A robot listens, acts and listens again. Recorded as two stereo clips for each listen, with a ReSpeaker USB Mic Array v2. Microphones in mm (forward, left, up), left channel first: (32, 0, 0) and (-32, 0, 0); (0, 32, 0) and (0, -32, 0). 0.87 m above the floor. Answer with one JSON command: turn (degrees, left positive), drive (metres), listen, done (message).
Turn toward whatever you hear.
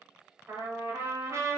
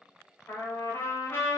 {"turn": 135}
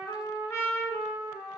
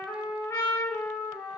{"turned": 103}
{"turn": 35}
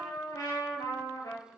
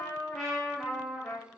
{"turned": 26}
{"done": "Found it: a trumpet, straight ahead, 1 to 2 m away."}